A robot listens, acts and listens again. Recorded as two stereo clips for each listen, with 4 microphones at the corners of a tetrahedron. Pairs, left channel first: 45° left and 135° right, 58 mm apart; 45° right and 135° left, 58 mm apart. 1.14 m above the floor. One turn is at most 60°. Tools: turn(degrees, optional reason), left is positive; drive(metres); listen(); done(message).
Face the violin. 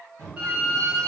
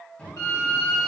turn(degrees=-60, reason="The violin: 70° right.")
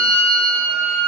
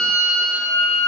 turn(degrees=-25, reason="The violin is now 25° right.")
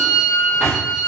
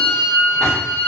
done("Facing the violin.")